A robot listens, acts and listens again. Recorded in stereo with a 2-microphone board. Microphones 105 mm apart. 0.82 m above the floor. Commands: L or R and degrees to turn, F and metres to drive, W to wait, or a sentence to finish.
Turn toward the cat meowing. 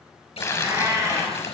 R30
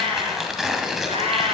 R110
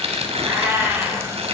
R20
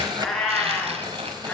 L10
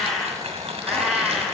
Found it: a cat meowing, straight ahead.